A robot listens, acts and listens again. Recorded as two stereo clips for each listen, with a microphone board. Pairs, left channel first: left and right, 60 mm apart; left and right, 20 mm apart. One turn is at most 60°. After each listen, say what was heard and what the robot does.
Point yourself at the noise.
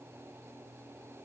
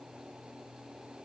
Keep listening.
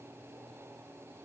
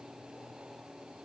Keep listening.
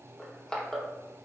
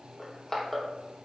Turn 30° left.
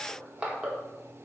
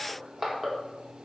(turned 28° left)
So it is at 20° right. Turn 20° right.
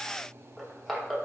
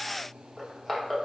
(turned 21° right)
Found it: crushing, straight ahead.